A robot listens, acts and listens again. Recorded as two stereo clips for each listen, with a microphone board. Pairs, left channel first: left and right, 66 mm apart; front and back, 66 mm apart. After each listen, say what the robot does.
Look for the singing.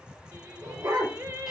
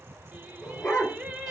Turn 120° right.
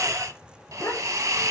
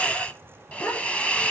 Keep listening.
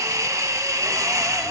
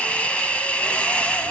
Keep listening.
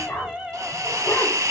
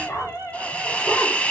Turn 10° right.
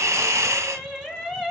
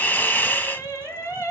Facing the singing.